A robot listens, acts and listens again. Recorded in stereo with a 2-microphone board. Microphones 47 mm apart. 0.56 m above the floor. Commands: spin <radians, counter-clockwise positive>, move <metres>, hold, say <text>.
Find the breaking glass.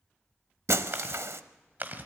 spin -1.31
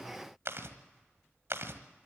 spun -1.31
hold
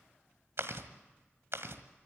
say I heard breaking glass, but can't make it out now. It was about straight ahead or 30° right.